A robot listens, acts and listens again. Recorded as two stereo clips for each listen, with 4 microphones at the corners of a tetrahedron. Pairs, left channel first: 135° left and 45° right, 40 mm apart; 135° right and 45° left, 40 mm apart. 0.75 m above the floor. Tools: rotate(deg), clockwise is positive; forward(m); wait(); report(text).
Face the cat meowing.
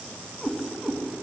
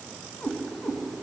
rotate(145)
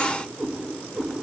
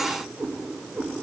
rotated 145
report("Facing the cat meowing, over 4 m away.")